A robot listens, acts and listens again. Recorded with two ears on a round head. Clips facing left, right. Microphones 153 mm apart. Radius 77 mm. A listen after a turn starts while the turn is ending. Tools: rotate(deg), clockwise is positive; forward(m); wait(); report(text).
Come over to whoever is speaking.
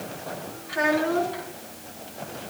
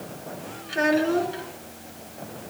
rotate(30)
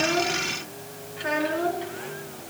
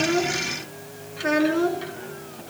rotate(120)
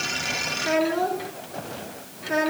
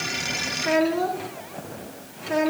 forward(1.0)
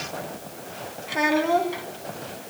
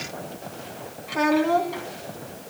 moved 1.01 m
forward(1.0)
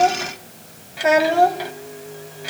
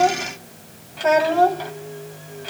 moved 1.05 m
rotate(-15)
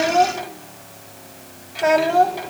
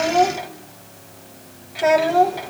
forward(1.0)
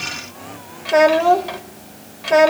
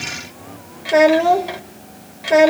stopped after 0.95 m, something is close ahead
rotate(10)
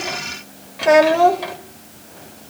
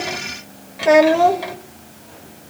report("Arrived at the child speaking, straight ahead.")